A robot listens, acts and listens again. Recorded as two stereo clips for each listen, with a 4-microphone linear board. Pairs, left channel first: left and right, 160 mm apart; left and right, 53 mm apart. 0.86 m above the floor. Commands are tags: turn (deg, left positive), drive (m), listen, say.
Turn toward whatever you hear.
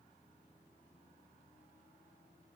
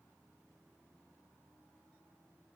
<listen/>
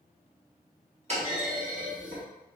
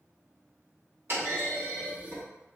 <turn deg="-45"/>
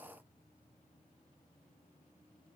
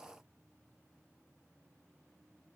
<listen/>
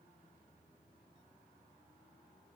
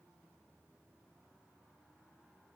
<say>I heard a clunk, but can't make it out now. It was about straight ahead or 90° right.</say>